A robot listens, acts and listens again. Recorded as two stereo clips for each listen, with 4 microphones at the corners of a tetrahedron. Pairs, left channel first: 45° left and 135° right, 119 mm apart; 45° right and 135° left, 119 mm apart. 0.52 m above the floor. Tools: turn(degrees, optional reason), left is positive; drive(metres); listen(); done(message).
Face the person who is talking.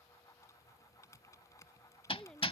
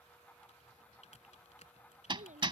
turn(degrees=130, reason="The child speaking: 130° left.")
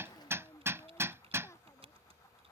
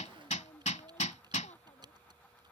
turn(degrees=-25, reason="The child speaking is now 25° right.")
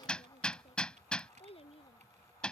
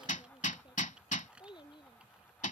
done("Found it: a child speaking, straight ahead.")